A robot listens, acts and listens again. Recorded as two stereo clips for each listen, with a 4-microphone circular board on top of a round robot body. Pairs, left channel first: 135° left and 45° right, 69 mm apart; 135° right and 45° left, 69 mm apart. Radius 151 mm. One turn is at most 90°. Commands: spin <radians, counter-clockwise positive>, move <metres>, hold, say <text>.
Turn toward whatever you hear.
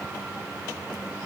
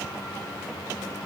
hold
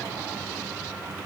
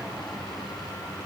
hold
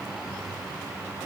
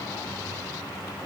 say I can't make out anything.